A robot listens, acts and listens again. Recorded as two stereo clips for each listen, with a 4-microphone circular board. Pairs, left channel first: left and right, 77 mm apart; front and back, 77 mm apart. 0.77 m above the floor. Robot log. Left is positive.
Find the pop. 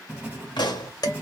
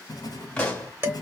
note: The pop: 75° left.
cmd yaw +75
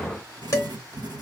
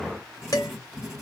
end: Facing where the pop came from. I can't hear it now.